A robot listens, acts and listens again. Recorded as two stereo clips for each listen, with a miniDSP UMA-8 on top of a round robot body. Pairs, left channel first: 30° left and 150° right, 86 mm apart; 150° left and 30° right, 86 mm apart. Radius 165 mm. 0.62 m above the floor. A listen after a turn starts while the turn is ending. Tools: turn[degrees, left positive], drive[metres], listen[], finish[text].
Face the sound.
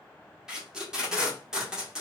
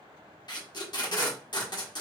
Thought: The tape being pulled: 130° left.
Action: turn[130]
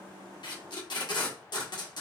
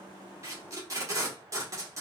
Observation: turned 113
Thought: The tape being pulled is now 15° left.
Action: turn[15]
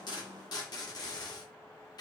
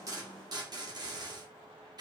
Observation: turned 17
Action: finish[Found it: tape being pulled, straight ahead, 1 to 2 m away.]